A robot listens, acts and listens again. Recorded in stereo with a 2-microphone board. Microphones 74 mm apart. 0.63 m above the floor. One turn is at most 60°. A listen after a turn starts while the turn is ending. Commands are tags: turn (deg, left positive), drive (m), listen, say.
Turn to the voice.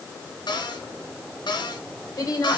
<turn deg="50"/>
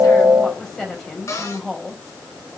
<say>Found it: a woman speaking, straight ahead, 2 to 4 m away.</say>